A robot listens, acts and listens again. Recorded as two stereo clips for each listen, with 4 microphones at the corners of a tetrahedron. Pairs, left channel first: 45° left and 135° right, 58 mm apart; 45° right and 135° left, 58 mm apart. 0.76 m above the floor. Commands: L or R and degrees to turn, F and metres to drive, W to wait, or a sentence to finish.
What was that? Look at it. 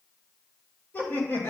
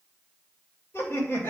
Found it: laughter, straight ahead.